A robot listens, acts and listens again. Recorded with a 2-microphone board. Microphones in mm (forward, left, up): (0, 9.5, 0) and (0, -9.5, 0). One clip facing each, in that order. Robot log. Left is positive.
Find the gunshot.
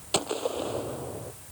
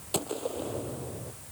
note: The gunshot: about 25° left or 155° left.
cmd yaw +25
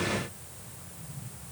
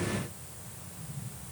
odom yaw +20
cmd idle
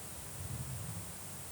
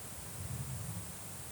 end: I heard a gunshot, but can't make it out now. It was about 5° left or 135° left.